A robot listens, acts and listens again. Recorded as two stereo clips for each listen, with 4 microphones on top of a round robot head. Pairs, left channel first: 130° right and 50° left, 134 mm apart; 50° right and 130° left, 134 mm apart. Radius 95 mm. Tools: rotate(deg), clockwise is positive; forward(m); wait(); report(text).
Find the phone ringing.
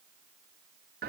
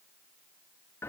wait()
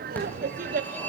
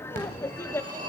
rotate(-150)
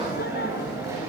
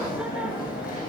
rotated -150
rotate(20)
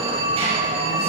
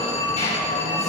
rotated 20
report("Found it: a phone ringing, straight ahead, over 4 m away.")